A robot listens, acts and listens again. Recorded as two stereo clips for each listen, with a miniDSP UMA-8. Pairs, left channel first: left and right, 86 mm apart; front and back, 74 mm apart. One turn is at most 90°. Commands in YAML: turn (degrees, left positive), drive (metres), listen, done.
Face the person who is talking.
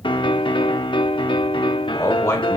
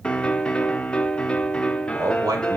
turn: 90
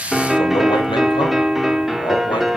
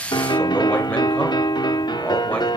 turn: 60
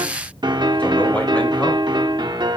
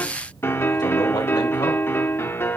listen: true
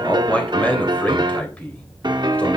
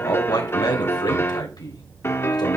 turn: 15
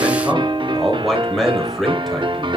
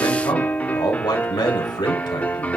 done: "Found it: a man speaking, straight ahead, 2 to 4 m away."